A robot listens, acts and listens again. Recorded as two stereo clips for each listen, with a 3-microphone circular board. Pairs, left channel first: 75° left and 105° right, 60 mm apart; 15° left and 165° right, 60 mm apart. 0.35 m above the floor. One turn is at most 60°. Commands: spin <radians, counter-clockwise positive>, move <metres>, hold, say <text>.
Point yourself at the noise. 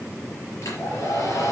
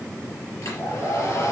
spin 0.79
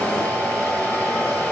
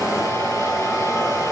say Found it: a hair dryer, straight ahead, over 4 m away.